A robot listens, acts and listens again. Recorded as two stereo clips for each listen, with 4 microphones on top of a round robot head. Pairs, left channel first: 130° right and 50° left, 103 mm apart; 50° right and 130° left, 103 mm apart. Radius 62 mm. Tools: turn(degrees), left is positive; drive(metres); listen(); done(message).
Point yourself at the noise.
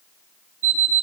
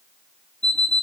turn(degrees=35)
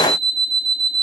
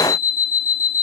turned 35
done("Facing the alarm clock.")